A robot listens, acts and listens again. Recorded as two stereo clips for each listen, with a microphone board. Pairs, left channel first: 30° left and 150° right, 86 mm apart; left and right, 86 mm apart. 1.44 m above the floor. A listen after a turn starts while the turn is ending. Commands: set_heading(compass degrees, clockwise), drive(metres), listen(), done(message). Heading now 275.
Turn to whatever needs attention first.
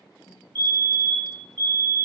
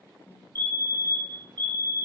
set_heading(40)
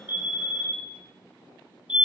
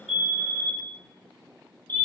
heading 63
set_heading(38)
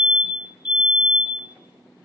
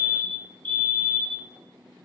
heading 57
set_heading(42)
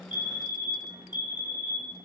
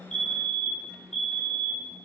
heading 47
done("Found it: a fire alarm, straight ahead.")